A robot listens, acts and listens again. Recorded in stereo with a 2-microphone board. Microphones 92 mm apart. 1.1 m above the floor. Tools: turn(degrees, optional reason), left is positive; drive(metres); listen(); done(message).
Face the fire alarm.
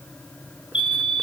turn(degrees=70, reason="The fire alarm: about 70° left or 110° left.")
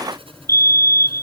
turn(degrees=35, reason="So it is at 35° left.")
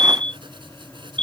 turn(degrees=15, reason="The fire alarm is now 15° left.")
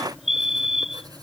done("Found it: a fire alarm, straight ahead.")